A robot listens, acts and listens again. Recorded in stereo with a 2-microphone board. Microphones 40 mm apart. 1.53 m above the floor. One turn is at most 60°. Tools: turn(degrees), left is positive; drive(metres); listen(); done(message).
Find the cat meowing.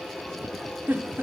listen()
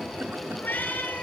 turn(degrees=55)
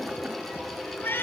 turn(degrees=60)
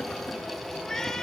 turn(degrees=15)
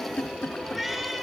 done("Found it: a cat meowing, straight ahead, over 4 m away.")